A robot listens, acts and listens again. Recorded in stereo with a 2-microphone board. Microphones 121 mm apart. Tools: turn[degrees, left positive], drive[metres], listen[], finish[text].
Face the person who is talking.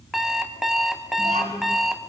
Action: turn[-90]
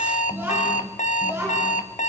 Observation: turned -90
Thought: So it is at 20° right.
Action: turn[-20]
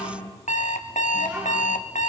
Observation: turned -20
Thought: The child speaking is now 10° right.
Action: turn[-10]
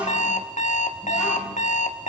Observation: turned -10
Action: finish[Found it: a child speaking, straight ahead, over 4 m away.]